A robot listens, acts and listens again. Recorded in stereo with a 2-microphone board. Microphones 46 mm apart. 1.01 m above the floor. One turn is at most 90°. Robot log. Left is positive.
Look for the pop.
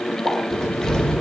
note: The pop: about 70° right or 110° right.
cmd yaw -70
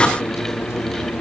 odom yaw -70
cmd idle
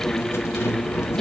end: I heard a pop, but can't make it out now. It was about straight ahead or 40° right.